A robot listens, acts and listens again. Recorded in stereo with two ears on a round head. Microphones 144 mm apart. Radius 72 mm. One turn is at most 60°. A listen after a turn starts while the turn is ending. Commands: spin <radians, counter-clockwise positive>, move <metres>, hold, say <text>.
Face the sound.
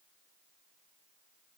hold
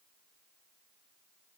hold
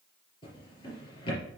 spin 0.52
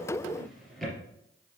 say Facing the drawer.